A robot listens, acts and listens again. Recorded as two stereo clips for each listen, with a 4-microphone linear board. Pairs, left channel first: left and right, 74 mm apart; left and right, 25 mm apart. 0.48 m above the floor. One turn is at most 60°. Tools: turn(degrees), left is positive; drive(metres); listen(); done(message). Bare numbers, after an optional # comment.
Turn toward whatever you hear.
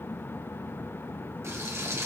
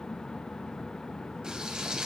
# The frying: about 35° right or 145° right.
turn(-35)
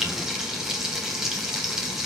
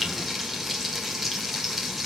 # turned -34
done("Facing the frying, 2 to 4 m away.")